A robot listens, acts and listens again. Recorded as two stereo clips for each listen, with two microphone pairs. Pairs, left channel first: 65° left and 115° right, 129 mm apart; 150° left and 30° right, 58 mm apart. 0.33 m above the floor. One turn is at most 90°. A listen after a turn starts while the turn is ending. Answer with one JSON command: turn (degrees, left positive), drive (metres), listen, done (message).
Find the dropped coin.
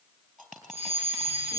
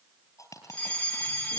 {"turn": 90}
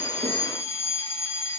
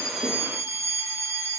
{"turn": 65}
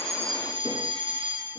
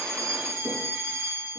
{"done": "Facing where the dropped coin came from. I can't hear it now."}